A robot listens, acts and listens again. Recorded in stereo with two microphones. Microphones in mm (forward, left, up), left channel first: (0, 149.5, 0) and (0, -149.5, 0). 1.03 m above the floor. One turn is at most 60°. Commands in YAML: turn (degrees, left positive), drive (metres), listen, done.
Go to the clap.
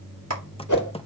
turn: -55
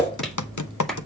drive: 1.0
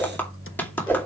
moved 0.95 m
drive: 1.0
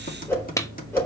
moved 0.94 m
turn: 10
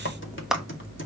drive: 1.0
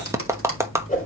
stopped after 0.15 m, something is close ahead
turn: -10
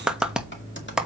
done: "I am next to the clap."